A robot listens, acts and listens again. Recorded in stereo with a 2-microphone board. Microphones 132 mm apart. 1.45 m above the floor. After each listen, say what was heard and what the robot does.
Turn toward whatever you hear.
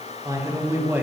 Turn 30° right.
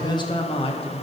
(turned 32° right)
So it is at 50° left. Turn 50° left.
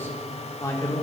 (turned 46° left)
The man speaking is now 25° left. Turn 25° left.
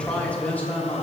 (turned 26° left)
The man speaking is now 15° left. Turn 15° left.
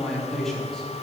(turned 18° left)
Facing the man speaking, 2 to 4 m away.